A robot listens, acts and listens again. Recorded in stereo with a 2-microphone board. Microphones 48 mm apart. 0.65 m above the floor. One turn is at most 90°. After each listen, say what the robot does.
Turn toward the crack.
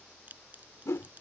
Turn 35° right.
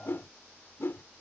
Keep listening.
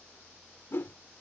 I heard a crack, but can't make it out now. It was about straight ahead or 110° right.